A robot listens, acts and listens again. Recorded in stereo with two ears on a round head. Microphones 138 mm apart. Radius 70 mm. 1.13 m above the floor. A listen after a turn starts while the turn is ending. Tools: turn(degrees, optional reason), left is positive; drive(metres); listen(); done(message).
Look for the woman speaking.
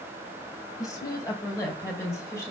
turn(degrees=15, reason="The woman speaking: about 15° left or 165° left.")
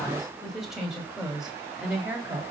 turn(degrees=-30)
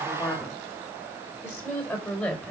turn(degrees=10, reason="So it is at 10° left.")
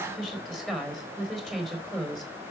done("Found it: a woman speaking, straight ahead, over 4 m away.")